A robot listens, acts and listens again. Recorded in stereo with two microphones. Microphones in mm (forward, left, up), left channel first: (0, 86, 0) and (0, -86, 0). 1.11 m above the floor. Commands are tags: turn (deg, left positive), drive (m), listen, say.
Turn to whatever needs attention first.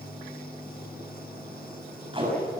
<listen/>
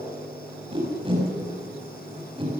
<listen/>
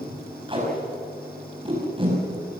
<say>I can't make out anything urgent, only tape being pulled.</say>